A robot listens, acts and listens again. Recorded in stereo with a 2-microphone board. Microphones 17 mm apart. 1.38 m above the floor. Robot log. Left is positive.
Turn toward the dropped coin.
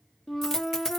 note: The dropped coin: about 25° left or 155° left.
cmd yaw +25
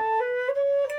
cmd idle
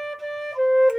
end: I heard a dropped coin, but can't make it out now. It was about straight ahead or 130° left.